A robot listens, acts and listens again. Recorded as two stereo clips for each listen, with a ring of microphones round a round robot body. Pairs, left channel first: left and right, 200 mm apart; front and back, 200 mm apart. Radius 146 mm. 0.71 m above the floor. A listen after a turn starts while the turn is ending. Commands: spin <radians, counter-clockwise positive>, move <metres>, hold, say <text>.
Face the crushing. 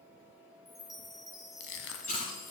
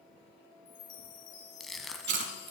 spin 1.57
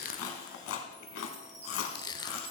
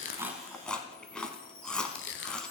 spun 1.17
spin 0.35
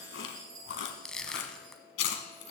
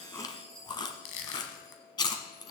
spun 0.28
say Found it: crushing, straight ahead.